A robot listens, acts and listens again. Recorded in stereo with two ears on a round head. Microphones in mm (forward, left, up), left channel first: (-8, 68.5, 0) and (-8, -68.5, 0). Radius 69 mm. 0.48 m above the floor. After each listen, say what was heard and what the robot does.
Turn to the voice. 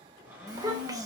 The child speaking: about 25° right or 155° right. Turn 25° right.
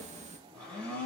So it is at 130° right. Turn 130° right.
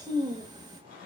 The child speaking is now 30° right. Turn 30° right.
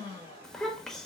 Facing the child speaking, under 1 m away.